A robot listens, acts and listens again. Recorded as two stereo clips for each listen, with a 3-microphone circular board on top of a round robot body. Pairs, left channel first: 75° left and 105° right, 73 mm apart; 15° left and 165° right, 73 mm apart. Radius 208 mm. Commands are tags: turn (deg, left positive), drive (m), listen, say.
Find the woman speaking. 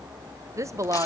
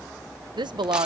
<turn deg="-150"/>
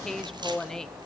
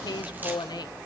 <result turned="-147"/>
<say>Facing the woman speaking, 1 to 2 m away.</say>